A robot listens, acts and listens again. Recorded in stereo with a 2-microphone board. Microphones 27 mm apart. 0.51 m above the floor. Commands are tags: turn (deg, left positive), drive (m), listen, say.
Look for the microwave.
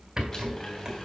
<turn deg="20"/>
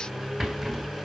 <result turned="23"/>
<turn deg="140"/>
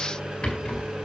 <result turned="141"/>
<say>Facing the microwave, over 4 m away.</say>